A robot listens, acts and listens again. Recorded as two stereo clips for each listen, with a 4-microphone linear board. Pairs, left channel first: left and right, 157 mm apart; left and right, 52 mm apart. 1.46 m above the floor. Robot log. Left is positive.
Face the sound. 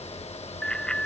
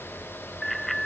cmd yaw +30
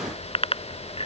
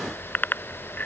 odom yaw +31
note: So it is at 140° left.
cmd yaw +140
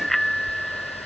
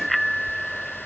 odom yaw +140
end: Found it: a bicycle bell, straight ahead.